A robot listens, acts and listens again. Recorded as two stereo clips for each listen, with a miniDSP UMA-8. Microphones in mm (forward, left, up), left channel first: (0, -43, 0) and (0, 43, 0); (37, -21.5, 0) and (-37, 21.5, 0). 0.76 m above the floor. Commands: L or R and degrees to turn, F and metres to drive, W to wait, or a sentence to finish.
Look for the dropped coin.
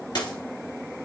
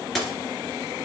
R120
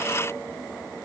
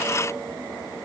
Facing where the dropped coin came from. I can't hear it now.